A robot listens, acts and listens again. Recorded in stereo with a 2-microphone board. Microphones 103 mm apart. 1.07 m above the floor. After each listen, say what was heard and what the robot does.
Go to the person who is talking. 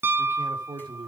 The man speaking: about 45° right or 135° right. Turn 45° right.
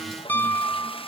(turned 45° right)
Keep listening.
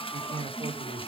So it is at 90° right. Turn 90° right.
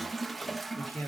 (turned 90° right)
The man speaking is now 25° left. Turn 25° left.
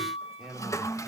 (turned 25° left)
Drive 1.0 m forward.
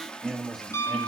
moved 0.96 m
Drive 1.0 m forward.
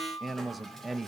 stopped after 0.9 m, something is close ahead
Arrived at the man speaking, straight ahead.